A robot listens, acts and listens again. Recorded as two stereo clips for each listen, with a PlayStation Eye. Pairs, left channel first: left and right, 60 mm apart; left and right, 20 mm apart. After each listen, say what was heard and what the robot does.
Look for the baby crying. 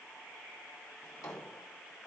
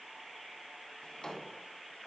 Keep listening.
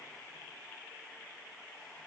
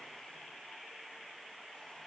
Keep listening.
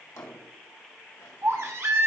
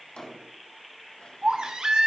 The baby crying: about 50° right or 130° right. Turn 50° right.
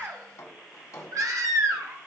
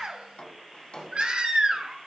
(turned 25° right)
So it is at 100° right. Turn 100° right.
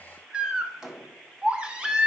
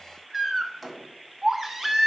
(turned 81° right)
The baby crying is now 20° right. Turn 20° right.
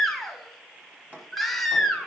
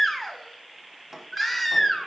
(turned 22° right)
Found it: a baby crying, straight ahead, 1 to 2 m away.